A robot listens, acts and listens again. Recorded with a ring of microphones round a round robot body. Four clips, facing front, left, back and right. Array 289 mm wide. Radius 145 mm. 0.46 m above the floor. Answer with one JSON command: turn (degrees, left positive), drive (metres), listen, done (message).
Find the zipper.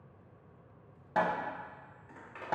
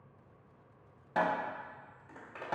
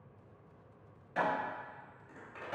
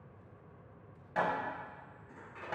{"turn": 75}
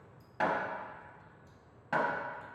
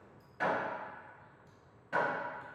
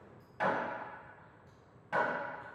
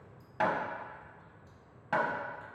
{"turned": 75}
{"listen": true}
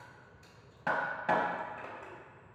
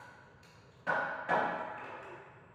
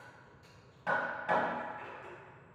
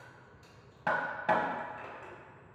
{"turn": -20}
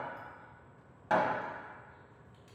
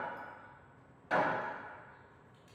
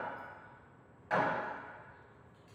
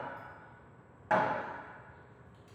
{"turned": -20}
{"listen": true}
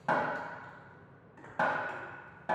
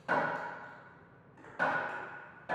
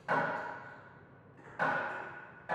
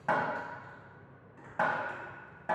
{"listen": true}
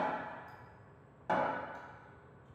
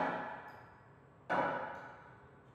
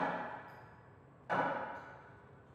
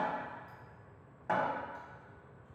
{"done": "I heard a zipper from this way, but can't make it out now."}